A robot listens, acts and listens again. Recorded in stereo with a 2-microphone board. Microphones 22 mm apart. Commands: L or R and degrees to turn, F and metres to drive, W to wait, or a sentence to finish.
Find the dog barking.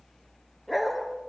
L30
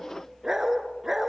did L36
R25
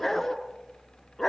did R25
L10
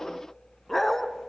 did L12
L10
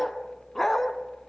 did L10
L15
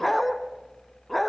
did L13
Facing the dog barking, 1 to 2 m away.